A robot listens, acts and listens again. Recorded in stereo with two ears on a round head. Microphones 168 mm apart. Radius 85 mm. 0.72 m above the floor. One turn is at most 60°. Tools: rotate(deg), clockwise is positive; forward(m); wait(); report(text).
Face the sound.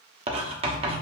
rotate(30)
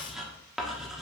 report("Facing the writing, 1 to 2 m away.")